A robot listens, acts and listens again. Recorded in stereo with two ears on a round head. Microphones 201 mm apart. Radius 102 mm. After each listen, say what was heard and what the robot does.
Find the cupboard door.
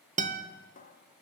The cupboard door: about 35° left or 145° left. Turn 35° left.
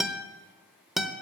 Keep listening.
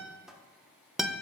Facing the cupboard door, 1 to 2 m away.